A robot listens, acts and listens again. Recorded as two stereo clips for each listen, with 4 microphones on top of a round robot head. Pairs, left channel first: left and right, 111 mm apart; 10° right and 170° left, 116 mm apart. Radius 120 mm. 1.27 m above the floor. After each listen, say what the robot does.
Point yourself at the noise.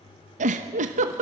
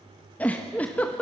Turn 90° right.
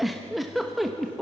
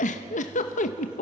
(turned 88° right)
Found it: a giggle, straight ahead.